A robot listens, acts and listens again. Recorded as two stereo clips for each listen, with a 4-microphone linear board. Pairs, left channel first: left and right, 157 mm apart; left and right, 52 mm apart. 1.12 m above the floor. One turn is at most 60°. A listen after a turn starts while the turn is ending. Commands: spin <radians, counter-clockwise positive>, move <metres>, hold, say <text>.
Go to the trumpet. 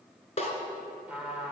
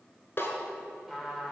spin -0.52
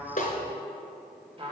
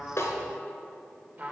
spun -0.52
spin -1.05
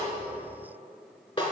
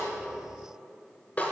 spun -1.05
spin -1.05
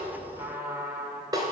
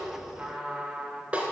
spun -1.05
spin -0.26
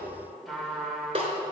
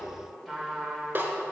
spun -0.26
move 1.0
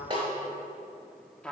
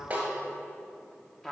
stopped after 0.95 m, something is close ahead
say Arrived at the trumpet, straight ahead.